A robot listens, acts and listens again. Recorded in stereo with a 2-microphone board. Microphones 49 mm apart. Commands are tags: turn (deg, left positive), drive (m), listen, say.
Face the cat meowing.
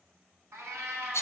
<turn deg="-65"/>
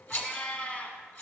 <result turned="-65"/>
<turn deg="25"/>
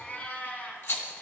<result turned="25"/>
<turn deg="40"/>
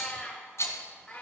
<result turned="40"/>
<turn deg="20"/>
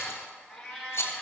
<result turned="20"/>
<say>Facing the cat meowing, 2 to 4 m away.</say>